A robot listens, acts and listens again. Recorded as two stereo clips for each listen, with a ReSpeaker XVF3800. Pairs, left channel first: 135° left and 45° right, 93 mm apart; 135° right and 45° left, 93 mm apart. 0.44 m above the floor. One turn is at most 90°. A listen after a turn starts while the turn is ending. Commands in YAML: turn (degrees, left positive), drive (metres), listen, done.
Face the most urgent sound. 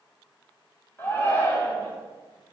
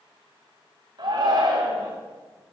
turn: 70
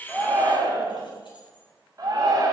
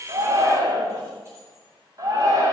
done: "Found it: a shout, straight ahead, 2 to 4 m away."